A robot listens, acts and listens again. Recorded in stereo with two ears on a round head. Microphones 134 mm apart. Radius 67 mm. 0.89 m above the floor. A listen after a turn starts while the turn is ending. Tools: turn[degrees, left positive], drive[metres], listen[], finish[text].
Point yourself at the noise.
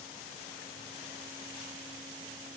Action: listen[]
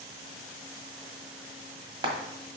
Thought: The frying: about 35° right or 145° right.
Action: turn[-35]
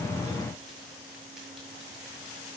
Action: listen[]
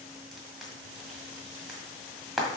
Action: finish[Found it: frying, straight ahead.]